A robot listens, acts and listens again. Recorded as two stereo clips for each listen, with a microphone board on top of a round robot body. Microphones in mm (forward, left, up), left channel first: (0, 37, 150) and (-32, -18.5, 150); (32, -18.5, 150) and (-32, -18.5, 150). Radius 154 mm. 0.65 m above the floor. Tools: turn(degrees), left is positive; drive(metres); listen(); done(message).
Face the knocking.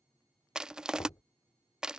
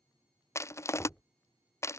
turn(degrees=75)
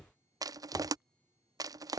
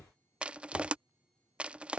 turn(degrees=10)
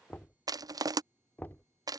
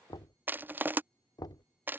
done("Found it: knocking, straight ahead.")